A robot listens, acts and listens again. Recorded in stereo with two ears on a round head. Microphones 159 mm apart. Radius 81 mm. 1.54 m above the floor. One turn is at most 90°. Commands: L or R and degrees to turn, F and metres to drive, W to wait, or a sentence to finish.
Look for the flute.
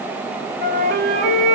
R55
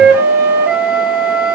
R65
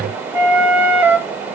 R15
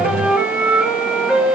Facing the flute, over 4 m away.